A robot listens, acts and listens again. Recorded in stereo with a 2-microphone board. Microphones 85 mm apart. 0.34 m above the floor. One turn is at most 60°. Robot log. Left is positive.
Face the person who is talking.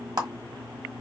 cmd idle
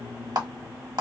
cmd idle
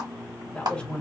cmd yaw +30
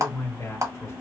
note: So it is at 135° left.
cmd yaw +60
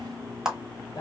note: The man speaking is now 100° left.
cmd yaw +60
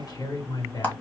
note: The man speaking is now 70° left.
cmd yaw +60
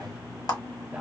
note: The man speaking is now 20° right.
cmd yaw -20
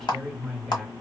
end: Facing the man speaking.